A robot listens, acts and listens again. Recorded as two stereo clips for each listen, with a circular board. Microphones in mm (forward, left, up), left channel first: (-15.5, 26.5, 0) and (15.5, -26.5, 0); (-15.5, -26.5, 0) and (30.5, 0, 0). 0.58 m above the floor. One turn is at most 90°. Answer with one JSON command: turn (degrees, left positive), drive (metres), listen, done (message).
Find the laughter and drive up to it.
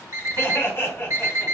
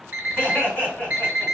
{"turn": 90}
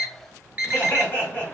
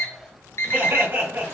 {"turn": 65}
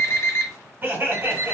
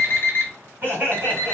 {"turn": -10}
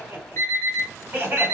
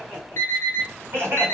{"drive": 1.0}
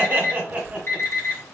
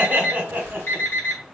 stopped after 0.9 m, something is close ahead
{"done": "I am next to the laughter."}